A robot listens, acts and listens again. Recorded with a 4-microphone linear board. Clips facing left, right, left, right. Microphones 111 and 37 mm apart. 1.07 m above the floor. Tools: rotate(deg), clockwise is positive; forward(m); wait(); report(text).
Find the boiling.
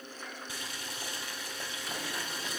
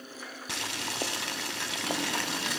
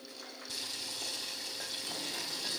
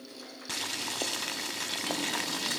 rotate(70)
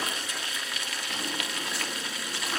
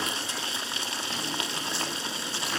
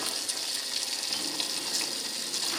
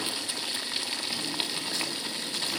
rotate(30)
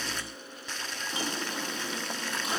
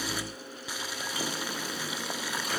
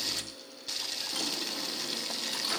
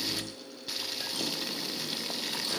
rotate(10)
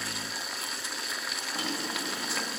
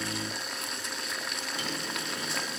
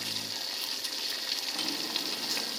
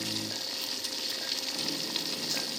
report("Found it: boiling, straight ahead, 1 to 2 m away.")